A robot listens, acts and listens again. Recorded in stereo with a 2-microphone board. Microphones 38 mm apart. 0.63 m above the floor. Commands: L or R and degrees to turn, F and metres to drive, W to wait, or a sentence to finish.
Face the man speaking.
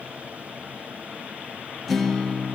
W
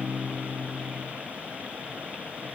W
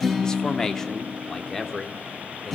L30
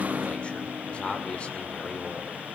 L145
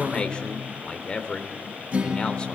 L25
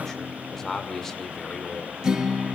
L10
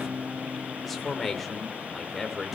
Found it: a man speaking, straight ahead, 2 to 4 m away.